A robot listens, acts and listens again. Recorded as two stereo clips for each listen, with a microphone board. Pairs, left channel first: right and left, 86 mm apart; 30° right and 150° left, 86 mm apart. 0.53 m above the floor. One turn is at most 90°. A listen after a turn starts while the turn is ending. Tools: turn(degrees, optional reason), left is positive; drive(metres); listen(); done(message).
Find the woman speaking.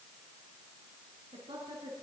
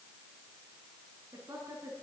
turn(degrees=90, reason="The woman speaking: 100° left.")
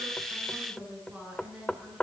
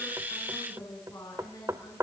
turn(degrees=15, reason="The woman speaking is now 15° left.")
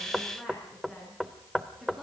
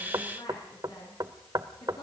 done("Facing the woman speaking.")